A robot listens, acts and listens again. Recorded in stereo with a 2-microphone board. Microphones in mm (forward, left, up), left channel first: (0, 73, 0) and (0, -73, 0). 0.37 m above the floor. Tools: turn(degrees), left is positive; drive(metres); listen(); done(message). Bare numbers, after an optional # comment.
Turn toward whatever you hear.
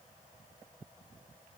listen()
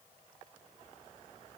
listen()
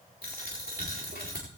turn(90)
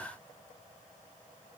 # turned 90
done("I heard a dropped coin from this way, but can't make it out now.")